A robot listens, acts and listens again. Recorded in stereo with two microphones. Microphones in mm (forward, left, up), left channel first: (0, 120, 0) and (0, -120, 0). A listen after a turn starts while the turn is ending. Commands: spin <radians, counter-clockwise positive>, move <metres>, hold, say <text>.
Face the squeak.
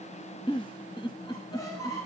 spin 0.52
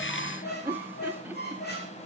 spin 2.36
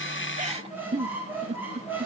spin -0.17
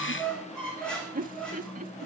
say Facing the squeak.